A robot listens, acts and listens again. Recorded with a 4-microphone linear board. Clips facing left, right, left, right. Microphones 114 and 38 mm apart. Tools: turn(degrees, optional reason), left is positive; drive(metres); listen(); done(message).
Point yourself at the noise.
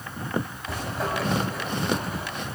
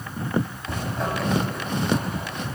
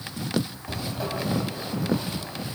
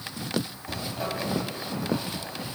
turn(degrees=30)
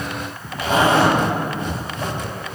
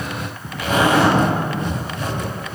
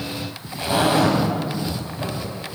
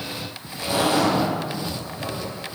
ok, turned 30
turn(degrees=150, reason="So it is at 150° left.")
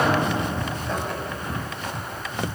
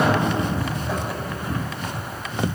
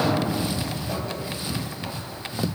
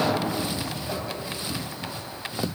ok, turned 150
done("Facing the zipper.")